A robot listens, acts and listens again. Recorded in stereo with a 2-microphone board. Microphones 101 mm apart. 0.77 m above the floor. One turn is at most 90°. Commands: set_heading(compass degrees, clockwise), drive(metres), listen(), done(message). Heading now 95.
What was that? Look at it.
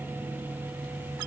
listen()
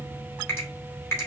set_heading(70)
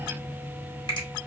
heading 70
listen()
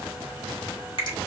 set_heading(340)
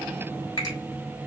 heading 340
set_heading(295)
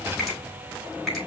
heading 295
listen()
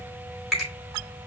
done("Found it: a finger snap, straight ahead, 2 to 4 m away.")